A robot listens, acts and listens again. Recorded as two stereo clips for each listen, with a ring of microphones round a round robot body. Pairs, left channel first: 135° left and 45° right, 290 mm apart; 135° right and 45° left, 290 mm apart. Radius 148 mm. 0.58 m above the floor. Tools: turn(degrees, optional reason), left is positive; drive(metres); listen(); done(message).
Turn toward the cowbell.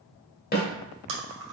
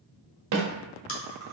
listen()
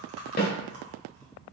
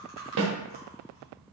listen()
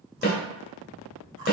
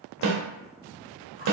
done("I can't make out a cowbell to turn to.")